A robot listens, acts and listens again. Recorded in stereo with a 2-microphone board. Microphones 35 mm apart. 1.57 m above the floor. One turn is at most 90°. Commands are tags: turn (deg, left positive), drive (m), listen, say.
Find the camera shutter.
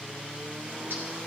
<listen/>
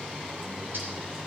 <listen/>
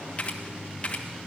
<turn deg="35"/>
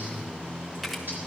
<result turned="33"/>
<say>Found it: a camera shutter, straight ahead, 1 to 2 m away.</say>